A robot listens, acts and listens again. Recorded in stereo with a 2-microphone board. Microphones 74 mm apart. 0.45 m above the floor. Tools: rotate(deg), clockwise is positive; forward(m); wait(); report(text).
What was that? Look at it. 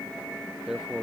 rotate(30)
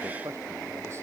wait()
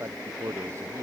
rotate(140)
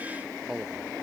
rotate(10)
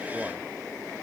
wait()
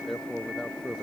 report("Facing the man speaking.")